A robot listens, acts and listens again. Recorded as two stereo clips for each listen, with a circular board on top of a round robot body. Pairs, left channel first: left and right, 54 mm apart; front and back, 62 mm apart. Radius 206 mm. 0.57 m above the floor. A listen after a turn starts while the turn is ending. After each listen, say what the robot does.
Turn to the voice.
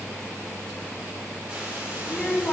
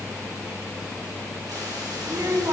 Turn 150° left.
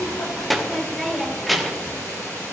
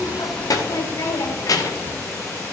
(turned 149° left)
Found it: a child speaking, straight ahead.